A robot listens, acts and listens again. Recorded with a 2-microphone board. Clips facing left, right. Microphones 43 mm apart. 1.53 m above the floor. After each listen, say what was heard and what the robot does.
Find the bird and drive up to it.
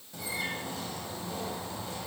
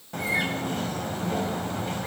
The bird: about 55° right or 125° right. Turn 55° right.
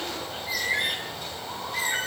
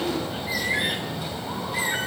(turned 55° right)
Drive 1.0 m forward.
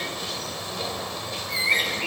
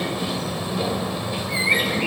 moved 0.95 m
The bird is now 10° right. Turn 10° right.
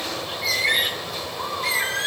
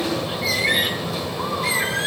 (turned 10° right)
Drive 1.0 m forward.
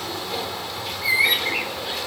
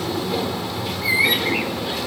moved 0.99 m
Drive 1.0 m forward.
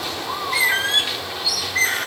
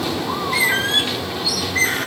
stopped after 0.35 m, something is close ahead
I am next to the bird.